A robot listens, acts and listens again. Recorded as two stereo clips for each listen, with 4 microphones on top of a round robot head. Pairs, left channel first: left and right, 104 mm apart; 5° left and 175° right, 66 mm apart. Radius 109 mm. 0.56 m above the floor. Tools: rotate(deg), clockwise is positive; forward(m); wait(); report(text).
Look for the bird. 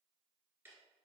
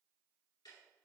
wait()
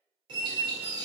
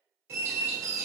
rotate(130)
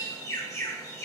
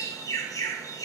rotate(-30)
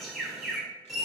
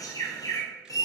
report("Facing the bird, 1 to 2 m away.")